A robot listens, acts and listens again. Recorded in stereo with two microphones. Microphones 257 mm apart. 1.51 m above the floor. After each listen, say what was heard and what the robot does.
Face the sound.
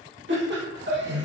The laughter: about 45° right or 135° right. Turn 45° right.
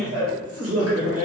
So it is at 85° right. Turn 85° right.
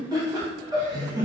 The laughter is now 15° right. Turn 15° right.
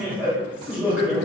Found it: laughter, straight ahead, under 1 m away.